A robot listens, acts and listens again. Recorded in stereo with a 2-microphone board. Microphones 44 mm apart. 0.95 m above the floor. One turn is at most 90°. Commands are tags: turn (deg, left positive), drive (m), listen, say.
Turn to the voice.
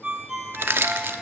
<listen/>
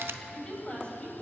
<turn deg="25"/>
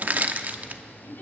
<listen/>
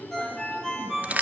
<listen/>
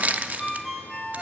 <say>I heard a woman speaking, but can't make it out now. It was about straight ahead or 130° left.</say>